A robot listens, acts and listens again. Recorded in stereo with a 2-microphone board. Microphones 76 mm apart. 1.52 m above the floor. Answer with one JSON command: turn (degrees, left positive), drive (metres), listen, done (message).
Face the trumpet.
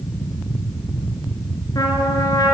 {"turn": 55}
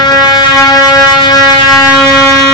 {"turn": 65}
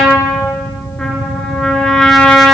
{"done": "Facing the trumpet."}